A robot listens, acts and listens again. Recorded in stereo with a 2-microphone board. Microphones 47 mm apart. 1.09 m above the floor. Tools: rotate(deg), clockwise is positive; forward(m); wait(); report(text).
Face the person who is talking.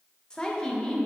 rotate(-20)
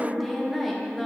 report("Found it: a woman speaking, straight ahead, 1 to 2 m away.")